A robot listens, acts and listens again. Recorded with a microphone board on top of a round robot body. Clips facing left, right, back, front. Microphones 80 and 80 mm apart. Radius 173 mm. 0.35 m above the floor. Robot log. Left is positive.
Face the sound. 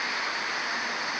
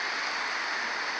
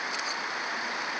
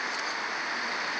cmd idle
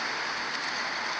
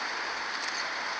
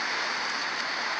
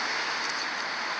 cmd idle
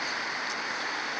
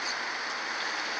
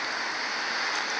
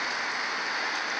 end: I can't make out anything to turn to.